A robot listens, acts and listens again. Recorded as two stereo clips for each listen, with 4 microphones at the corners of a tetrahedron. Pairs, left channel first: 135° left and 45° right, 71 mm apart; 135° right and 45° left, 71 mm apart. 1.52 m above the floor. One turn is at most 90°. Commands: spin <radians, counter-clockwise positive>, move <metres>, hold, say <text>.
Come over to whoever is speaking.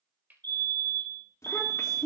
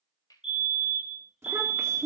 spin 1.57
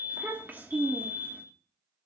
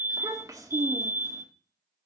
spin 0.26
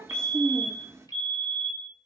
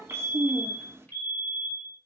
move 1.0
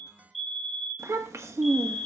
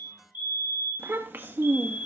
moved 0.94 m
spin -0.17
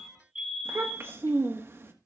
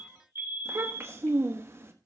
move 1.0
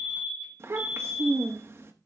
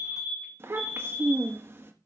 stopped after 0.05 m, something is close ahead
say Arrived at the child speaking, straight ahead.